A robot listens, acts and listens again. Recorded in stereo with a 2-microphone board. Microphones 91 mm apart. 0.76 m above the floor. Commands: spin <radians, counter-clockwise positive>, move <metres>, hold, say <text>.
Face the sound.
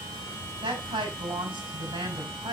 spin -1.22
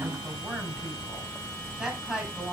spin -0.17
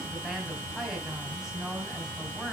say Found it: a woman speaking, straight ahead, 2 to 4 m away.